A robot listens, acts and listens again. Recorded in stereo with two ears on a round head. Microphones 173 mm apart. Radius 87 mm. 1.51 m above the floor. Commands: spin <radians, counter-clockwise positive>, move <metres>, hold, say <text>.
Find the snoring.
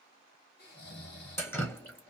spin 0.96
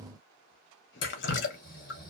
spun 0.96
spin 0.96
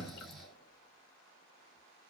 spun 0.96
say Facing the snoring, 1 to 2 m away.